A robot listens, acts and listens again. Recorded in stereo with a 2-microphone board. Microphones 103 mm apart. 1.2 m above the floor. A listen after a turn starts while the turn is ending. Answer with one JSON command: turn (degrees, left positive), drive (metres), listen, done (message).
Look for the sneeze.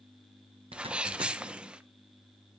{"turn": -30}
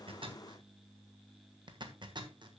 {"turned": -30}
{"listen": true}
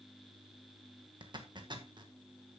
{"done": "I heard a sneeze, but can't make it out now. It was about 20° left or 140° right."}